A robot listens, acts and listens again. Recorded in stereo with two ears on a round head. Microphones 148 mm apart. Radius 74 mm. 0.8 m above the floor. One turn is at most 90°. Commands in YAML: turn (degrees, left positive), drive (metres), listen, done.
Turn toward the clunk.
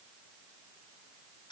listen: true
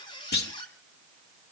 turn: 65
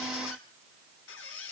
listen: true
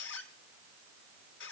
done: "I heard a clunk, but can't make it out now. It was about straight ahead or 50° left."